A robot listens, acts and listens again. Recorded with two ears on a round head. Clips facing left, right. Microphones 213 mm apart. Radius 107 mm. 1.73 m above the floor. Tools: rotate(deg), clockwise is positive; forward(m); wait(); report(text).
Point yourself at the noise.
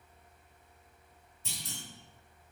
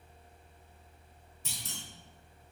rotate(55)
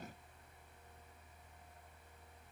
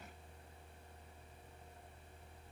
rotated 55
wait()
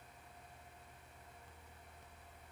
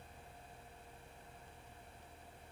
report("I heard a clunk, but can't make it out now. It was about straight ahead or 70° right.")